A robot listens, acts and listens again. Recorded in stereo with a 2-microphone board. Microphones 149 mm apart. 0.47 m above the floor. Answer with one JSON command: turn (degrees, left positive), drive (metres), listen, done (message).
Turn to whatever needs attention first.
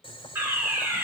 {"turn": -30}
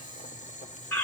{"turn": 15}
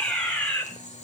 {"done": "Found it: a fire alarm, straight ahead, over 4 m away."}